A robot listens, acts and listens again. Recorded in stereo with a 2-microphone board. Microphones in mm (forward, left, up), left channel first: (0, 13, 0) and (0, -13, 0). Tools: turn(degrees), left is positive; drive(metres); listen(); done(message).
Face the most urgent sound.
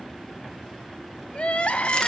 turn(degrees=55)
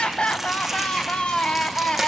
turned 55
turn(degrees=55)
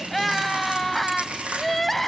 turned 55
turn(degrees=10)
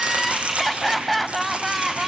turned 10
done("Found it: crying, straight ahead.")